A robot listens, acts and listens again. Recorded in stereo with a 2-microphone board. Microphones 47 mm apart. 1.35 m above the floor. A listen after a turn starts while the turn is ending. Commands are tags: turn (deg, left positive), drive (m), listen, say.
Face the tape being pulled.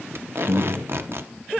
<turn deg="-55"/>
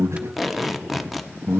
<say>Found it: tape being pulled, straight ahead, under 1 m away.</say>